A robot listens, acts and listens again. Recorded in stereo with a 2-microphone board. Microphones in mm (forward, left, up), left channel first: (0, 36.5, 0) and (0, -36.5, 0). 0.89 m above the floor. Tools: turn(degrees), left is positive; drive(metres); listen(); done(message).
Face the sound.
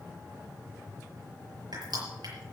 turn(degrees=-75)
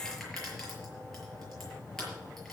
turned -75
done("Found it: crushing, straight ahead, over 4 m away.")